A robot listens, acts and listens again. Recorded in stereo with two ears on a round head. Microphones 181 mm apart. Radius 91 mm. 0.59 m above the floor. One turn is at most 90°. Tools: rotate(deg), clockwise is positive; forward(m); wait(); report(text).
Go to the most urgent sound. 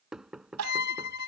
rotate(90)
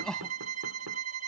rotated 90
forward(1.0)
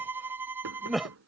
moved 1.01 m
forward(1.0)
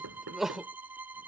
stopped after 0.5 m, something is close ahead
report("Arrived at the crying, straight ahead.")